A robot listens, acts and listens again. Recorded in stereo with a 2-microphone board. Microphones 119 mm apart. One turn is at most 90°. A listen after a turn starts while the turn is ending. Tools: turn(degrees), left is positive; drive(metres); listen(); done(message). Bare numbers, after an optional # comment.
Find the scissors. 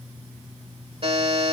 listen()
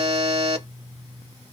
listen()
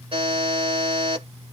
done("I can't make out scissors, only a buzzer.")